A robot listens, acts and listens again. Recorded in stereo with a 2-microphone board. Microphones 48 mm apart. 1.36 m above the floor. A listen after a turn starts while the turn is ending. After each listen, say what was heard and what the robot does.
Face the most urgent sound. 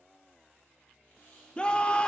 The scream: about 20° left or 160° left. Turn 20° left.
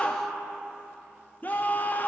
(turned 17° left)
So it is at 140° left. Turn 140° left.
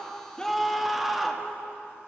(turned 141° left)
Found it: a scream, straight ahead, under 1 m away.